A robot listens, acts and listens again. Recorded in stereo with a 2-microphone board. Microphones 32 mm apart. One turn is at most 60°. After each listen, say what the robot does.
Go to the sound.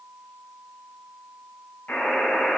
Turn 60° left.
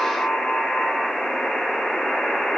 Turn 30° left.
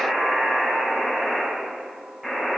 Drive 1.0 m forward.
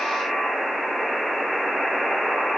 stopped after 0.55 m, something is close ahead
Blocked. The buzzer is further on, straight ahead.